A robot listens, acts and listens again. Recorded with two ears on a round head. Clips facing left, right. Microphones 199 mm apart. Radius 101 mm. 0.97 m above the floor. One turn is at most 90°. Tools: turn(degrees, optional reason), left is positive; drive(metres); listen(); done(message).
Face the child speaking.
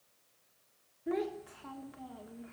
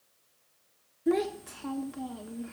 turn(degrees=-55, reason="The child speaking: about 55° right or 125° right.")
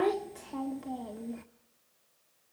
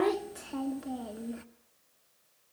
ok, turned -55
done("Found it: a child speaking, straight ahead.")